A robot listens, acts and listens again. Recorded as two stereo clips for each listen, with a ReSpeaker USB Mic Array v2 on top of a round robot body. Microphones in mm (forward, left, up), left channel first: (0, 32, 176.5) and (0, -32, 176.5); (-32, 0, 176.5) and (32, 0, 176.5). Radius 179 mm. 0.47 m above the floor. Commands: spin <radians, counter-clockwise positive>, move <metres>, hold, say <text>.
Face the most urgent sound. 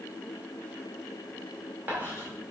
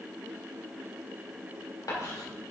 hold
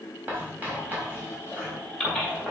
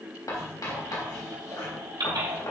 spin 0.17
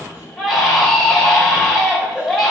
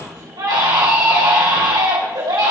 say Found it: a baby crying, straight ahead.